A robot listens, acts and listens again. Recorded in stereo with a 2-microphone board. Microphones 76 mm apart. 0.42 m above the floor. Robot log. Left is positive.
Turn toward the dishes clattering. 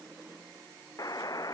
cmd idle
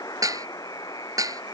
note: The dishes clattering: about 45° right or 135° right.
cmd yaw -45
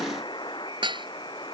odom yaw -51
note: So it is at 80° right.
cmd yaw -80
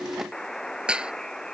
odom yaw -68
note: The dishes clattering is now 10° right.
cmd yaw -10
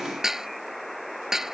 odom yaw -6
end: Facing the dishes clattering.